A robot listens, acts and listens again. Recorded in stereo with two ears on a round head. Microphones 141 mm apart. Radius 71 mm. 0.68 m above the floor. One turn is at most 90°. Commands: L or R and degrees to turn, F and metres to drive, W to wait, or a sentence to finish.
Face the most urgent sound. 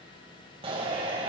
R35
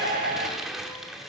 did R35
R90
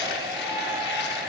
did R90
R20
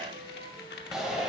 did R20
Found it: a shout, straight ahead.